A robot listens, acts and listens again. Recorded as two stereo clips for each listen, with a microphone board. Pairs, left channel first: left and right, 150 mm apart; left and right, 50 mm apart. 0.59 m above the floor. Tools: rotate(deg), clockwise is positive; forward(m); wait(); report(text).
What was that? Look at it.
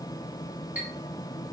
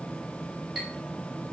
rotate(30)
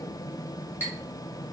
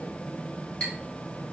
rotate(-15)
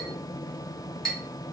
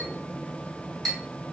report("Facing the clink.")